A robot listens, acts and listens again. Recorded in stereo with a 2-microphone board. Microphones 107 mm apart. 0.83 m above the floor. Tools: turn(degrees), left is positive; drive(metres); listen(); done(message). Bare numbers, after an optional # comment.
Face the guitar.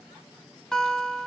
turn(30)
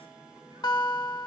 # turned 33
# So it is at 140° left.
turn(140)
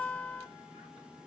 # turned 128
# The guitar is now 15° left.
turn(15)
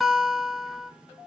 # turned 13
done("Found it: a guitar, straight ahead, 1 to 2 m away.")